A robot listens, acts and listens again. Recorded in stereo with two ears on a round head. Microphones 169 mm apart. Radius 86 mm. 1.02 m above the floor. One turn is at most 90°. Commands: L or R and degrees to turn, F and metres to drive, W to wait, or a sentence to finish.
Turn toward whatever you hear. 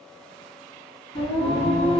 L30
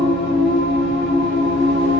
L90
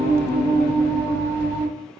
L15
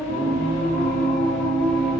Found it: singing, straight ahead.